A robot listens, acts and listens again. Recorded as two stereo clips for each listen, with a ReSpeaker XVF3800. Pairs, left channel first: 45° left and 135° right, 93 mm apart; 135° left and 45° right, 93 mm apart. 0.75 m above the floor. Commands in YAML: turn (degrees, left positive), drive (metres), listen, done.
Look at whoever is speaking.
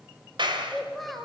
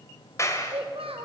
turn: -45
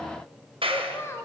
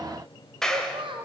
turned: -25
turn: -20
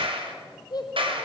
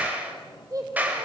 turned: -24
done: "Found it: a child speaking, straight ahead."